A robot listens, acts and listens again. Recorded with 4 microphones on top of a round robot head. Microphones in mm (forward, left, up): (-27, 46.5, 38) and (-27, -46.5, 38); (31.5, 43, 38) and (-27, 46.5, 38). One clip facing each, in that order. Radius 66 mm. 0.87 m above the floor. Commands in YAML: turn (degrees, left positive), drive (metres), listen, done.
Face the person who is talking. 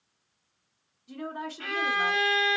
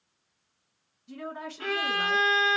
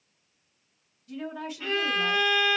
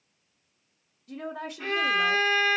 turn: 175
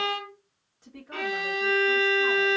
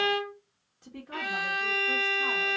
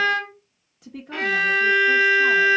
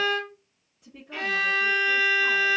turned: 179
done: "Found it: a woman speaking, straight ahead, 1 to 2 m away."